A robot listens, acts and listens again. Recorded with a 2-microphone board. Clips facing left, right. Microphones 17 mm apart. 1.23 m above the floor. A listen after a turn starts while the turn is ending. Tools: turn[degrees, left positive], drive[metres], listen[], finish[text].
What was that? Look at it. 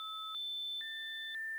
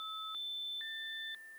Action: listen[]
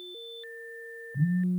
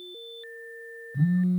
Thought: The phone buzzing: about 60° right or 120° right.
Action: turn[-60]
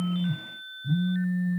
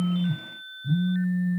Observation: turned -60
Action: finish[Found it: a phone buzzing, straight ahead.]